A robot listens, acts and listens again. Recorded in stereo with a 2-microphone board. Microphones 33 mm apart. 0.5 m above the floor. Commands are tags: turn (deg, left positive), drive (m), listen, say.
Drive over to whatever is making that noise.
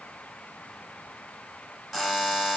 <turn deg="-30"/>
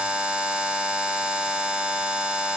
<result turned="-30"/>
<turn deg="-140"/>
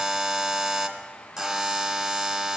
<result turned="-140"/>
<drive m="1.0"/>
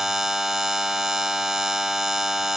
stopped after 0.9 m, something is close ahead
<turn deg="-15"/>
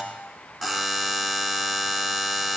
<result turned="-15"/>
<say>Arrived at the buzzer, straight ahead.</say>